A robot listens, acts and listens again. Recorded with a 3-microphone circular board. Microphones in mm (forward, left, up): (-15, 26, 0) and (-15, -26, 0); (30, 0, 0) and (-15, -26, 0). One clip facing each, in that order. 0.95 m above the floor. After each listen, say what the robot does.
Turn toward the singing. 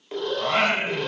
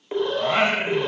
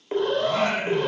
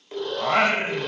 Turn 175° right.
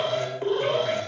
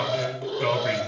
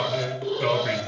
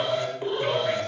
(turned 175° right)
Turn 35° right.
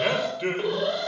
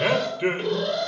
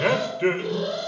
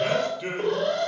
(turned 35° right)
Turn 20° right.
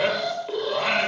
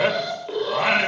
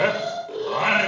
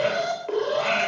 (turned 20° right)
Turn 30° right.
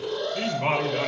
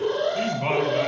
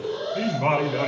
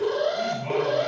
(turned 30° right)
Turn 10° left.
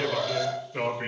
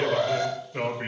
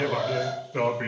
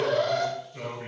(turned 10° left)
Found it: singing, straight ahead.